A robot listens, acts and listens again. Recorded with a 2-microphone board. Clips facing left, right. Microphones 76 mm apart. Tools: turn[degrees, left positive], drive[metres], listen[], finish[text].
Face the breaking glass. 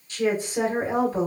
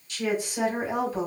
Action: listen[]
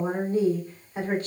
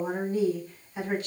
Action: listen[]
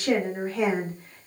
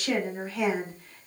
Action: finish[I can't make out breaking glass, only a woman speaking.]